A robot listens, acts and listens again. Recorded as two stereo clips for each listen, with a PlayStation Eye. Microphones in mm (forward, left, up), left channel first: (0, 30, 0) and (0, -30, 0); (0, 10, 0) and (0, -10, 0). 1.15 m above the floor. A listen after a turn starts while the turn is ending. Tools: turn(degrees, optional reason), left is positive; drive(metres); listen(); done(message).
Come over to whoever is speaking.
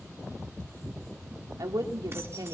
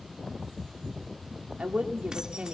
turn(degrees=-90)
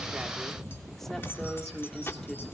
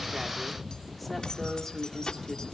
drive(metres=1.0)
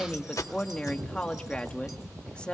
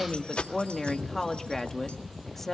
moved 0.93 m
turn(degrees=20, reason="The woman speaking is now 20° left.")
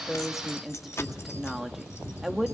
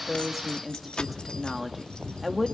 drive(metres=1.0)
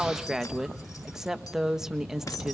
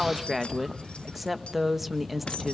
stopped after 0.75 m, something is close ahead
done("Arrived at the woman speaking, straight ahead.")